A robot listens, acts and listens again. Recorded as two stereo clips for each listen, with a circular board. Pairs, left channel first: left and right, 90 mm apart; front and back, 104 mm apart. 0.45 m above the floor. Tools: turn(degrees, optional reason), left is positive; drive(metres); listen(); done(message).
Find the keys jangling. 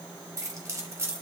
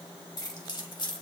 turn(degrees=-35, reason="The keys jangling: 35° right.")
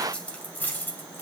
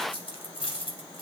turn(degrees=25, reason="The keys jangling is now 25° left.")
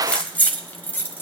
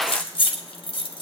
turn(degrees=30, reason="The keys jangling is now 30° left.")
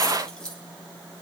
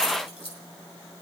turn(degrees=10, reason="The keys jangling is now 10° left.")
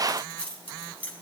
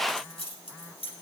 turn(degrees=15, reason="The keys jangling is now 15° left.")
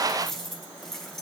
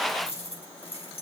done("Facing the keys jangling.")